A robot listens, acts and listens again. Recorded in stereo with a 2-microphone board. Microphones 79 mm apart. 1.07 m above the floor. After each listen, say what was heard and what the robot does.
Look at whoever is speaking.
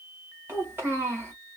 The child speaking: about 25° right or 155° right. Turn 25° right.
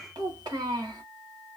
So it is at 125° right. Turn 125° right.
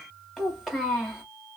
Found it: a child speaking, straight ahead.